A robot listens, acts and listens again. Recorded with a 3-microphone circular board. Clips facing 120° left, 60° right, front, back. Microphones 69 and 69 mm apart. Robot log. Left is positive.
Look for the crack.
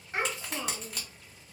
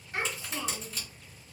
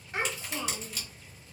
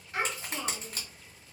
note: The crack: 135° left.
cmd yaw +135
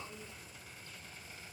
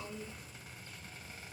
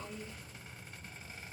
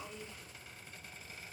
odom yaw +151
note: Nothing new. It was at 15° right.
cmd yaw -15
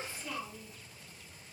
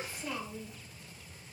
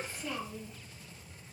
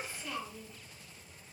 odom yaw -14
end: Facing where the crack came from. I can't hear it now.